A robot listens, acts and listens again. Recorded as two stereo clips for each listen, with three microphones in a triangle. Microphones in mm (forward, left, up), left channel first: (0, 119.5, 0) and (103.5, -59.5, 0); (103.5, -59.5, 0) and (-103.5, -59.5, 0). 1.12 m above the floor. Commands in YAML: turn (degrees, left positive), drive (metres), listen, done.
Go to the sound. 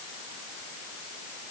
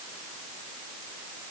listen: true
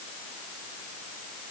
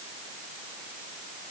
listen: true
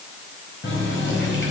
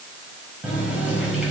turn: 95
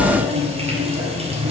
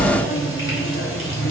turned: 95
drive: 1.0
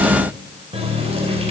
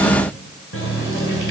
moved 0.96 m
drive: 1.0
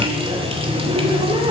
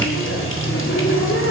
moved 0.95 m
drive: 1.0
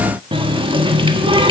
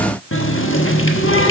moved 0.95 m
drive: 1.0
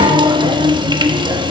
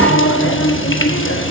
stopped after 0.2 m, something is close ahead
turn: 10
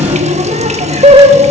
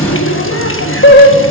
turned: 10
done: "I am next to the running tap."